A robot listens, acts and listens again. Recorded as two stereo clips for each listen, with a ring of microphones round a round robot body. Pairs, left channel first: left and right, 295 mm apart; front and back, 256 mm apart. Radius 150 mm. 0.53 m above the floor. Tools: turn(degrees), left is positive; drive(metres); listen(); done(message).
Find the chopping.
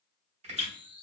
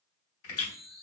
turn(degrees=-25)
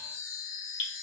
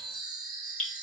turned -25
listen()
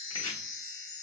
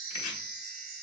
turn(degrees=15)
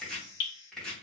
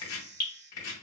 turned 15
done("Facing the chopping.")